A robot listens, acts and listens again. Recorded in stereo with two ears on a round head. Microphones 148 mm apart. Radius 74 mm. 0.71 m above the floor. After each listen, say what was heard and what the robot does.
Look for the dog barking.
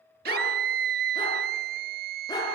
The dog barking: about 20° left or 160° left. Turn 20° left.
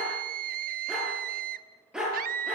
Found it: a dog barking, straight ahead.